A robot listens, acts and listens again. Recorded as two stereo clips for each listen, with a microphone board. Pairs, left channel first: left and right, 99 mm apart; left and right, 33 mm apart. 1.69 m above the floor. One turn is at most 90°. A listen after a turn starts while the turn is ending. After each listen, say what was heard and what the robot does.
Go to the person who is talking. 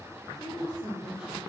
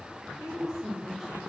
Turn 30° right.
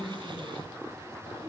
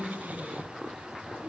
So it is at 145° right. Turn 90° right.
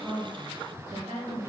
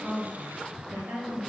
The woman speaking is now 70° right. Turn 70° right.
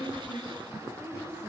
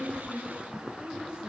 The woman speaking is now 25° right. Turn 25° right.
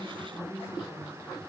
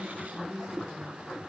The woman speaking is now 15° right. Turn 15° right.
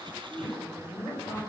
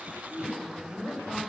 Drive 1.0 m forward.
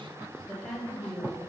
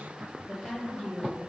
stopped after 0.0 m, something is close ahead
Blocked. The woman speaking is further on, straight ahead.